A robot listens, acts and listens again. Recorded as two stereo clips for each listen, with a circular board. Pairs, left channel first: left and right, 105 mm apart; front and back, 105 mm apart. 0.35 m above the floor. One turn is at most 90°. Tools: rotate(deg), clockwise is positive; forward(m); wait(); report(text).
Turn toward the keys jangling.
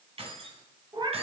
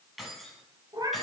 rotate(90)
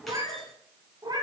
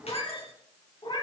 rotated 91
wait()
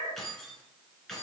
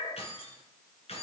report("Found it: keys jangling, straight ahead.")